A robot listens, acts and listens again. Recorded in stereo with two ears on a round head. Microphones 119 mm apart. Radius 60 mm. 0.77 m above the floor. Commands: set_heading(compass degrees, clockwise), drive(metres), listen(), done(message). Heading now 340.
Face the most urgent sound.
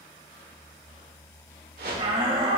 set_heading(25)
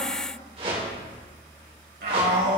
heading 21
set_heading(116)
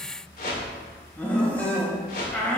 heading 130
set_heading(115)
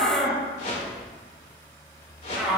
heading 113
done("Facing the shout, 2 to 4 m away.")